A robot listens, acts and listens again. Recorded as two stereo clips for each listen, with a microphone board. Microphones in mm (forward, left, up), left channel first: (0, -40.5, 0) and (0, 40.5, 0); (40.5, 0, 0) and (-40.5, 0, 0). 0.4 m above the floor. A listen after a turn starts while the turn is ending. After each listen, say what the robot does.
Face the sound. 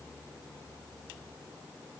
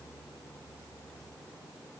Keep listening.
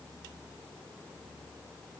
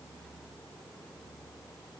Keep listening.
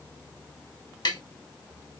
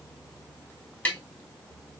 Turn 70° right.
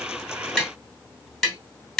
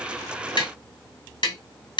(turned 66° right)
Facing the tapping.